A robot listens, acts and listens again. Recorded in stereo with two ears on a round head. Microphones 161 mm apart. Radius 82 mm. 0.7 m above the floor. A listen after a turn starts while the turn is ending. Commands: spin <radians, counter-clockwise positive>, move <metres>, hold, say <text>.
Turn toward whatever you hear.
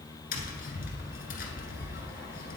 spin 0.96
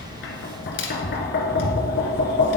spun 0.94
spin 1.13
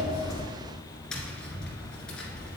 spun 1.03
say Found it: tapping, straight ahead.